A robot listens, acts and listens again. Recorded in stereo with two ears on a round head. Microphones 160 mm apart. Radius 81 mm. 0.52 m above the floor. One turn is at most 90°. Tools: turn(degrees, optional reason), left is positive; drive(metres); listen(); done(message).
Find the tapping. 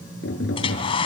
turn(degrees=70, reason="The tapping: about 70° left or 110° left.")
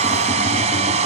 listen()
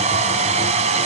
listen()
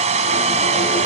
done("I heard tapping, but can't make it out now. It was about straight ahead or 40° left.")